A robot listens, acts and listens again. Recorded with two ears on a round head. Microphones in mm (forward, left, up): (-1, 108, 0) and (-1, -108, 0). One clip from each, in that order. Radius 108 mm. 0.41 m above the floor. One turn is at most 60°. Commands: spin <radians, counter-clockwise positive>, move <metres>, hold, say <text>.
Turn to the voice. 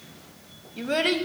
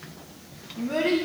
spin 1.05
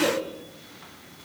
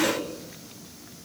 spin 0.52
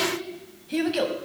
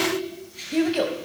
say Found it: a child speaking, straight ahead, 1 to 2 m away.